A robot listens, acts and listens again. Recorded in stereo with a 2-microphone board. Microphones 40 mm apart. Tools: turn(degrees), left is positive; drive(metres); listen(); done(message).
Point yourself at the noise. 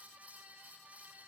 listen()
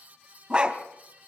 turn(degrees=-20)
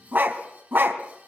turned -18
turn(degrees=-130)
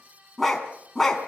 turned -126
turn(degrees=10)
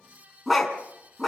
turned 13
done("Facing the dog barking, 2 to 4 m away.")